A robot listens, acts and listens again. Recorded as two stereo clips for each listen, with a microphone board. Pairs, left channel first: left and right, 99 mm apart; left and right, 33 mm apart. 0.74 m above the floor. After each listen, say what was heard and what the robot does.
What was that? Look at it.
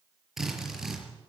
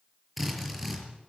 Turn 30° right.
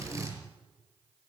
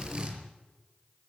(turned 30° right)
So it is at 145° right. Turn 145° right.
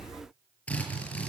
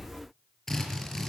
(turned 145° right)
The drill is now 15° left. Turn 15° left.
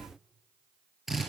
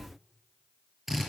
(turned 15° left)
Facing the drill, over 4 m away.